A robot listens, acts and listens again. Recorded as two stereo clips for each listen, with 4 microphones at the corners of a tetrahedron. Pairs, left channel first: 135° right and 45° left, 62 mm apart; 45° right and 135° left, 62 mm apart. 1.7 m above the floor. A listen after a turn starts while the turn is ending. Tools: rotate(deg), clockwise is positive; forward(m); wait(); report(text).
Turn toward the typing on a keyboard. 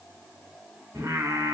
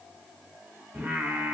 wait()
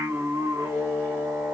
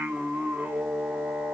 wait()
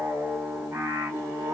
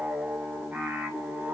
report("I can't make out typing on a keyboard, only singing.")